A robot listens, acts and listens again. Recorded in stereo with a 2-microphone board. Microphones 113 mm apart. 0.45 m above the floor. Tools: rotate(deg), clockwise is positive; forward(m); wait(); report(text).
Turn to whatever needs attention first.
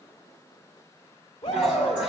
rotate(-55)
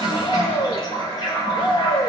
rotate(-55)
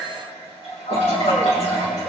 rotate(-20)
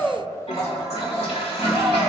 report("Facing the shout.")